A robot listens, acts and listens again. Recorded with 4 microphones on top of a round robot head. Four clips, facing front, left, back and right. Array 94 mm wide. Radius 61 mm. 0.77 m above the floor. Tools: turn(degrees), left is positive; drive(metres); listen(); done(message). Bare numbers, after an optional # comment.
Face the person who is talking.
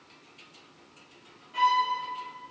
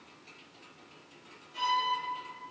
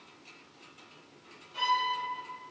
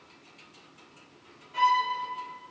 listen()
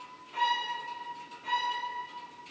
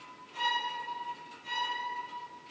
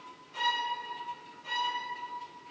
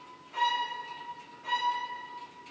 listen()
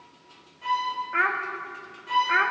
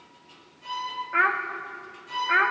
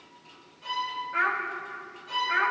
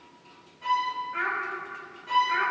# The child speaking: 60° left.
turn(60)
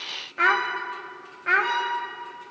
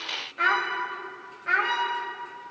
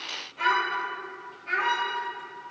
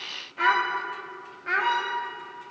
done("Found it: a child speaking, straight ahead, under 1 m away.")